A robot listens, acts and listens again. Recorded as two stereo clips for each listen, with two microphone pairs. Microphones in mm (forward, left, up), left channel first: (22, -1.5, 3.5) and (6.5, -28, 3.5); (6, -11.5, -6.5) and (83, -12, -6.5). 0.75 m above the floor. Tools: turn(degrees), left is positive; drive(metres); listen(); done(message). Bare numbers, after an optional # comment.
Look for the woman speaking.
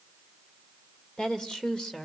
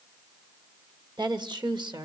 # The woman speaking: 10° right.
turn(-10)
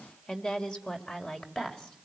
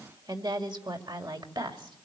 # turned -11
done("Found it: a woman speaking, straight ahead.")